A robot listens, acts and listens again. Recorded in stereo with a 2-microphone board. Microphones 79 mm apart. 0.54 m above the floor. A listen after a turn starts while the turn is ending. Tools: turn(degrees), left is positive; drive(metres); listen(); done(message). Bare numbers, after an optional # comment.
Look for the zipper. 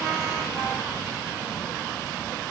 listen()
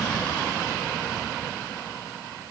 listen()
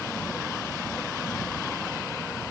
done("I can't make out a zipper to turn to.")